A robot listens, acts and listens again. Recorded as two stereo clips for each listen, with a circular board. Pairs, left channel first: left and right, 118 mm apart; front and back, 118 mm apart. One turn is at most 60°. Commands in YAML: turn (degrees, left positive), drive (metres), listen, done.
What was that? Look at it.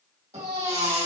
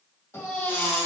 turn: -60
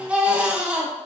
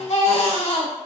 turn: -10
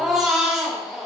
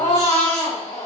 done: "Facing the baby crying, 1 to 2 m away."